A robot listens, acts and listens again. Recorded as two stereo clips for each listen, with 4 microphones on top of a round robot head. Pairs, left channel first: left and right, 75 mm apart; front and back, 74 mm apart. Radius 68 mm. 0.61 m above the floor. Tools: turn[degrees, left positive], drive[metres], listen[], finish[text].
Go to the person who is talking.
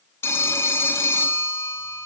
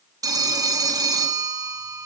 Action: listen[]
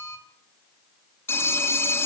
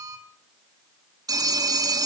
Action: listen[]
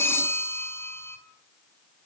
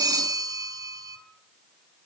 Action: finish[I can't make out anyone speaking to turn to.]